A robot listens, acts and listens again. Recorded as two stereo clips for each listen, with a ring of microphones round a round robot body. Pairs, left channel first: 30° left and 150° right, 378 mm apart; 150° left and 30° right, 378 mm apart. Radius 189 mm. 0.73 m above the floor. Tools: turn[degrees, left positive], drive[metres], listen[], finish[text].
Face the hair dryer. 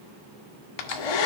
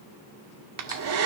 Thought: The hair dryer: 20° left.
Action: turn[20]
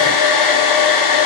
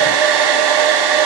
Action: finish[Found it: a hair dryer, straight ahead.]